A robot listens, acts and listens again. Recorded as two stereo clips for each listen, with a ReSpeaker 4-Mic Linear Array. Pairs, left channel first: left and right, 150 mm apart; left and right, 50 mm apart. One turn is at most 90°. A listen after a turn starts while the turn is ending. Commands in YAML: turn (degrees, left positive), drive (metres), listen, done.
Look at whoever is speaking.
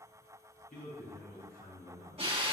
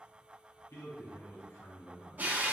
turn: 70
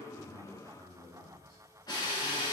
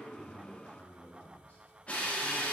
turn: 30
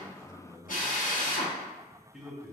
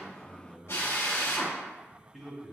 done: "Facing the man speaking."